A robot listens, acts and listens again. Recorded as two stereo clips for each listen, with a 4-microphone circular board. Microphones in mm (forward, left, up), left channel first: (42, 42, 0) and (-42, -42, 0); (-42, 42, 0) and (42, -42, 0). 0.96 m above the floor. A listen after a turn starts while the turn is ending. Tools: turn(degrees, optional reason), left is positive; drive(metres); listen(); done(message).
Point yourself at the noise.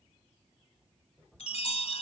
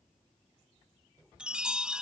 turn(degrees=35, reason="The chime: 35° left.")
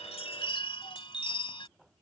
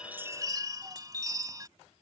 turn(degrees=10, reason="The chime is now 10° left.")
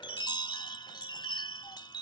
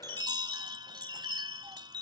done("Found it: a chime, straight ahead.")